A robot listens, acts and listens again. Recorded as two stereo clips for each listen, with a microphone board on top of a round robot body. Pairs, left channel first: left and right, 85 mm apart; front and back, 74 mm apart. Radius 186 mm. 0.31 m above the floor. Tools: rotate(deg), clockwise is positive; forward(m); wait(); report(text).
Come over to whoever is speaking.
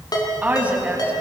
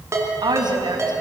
rotate(165)
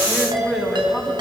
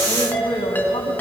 forward(1.0)
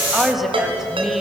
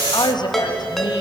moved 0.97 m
forward(1.0)
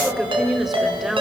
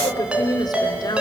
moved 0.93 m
forward(1.0)
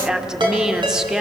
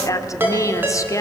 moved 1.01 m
rotate(10)
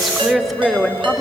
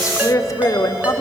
forward(1.0)
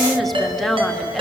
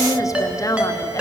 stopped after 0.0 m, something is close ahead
report("Arrived at the woman speaking, straight ahead.")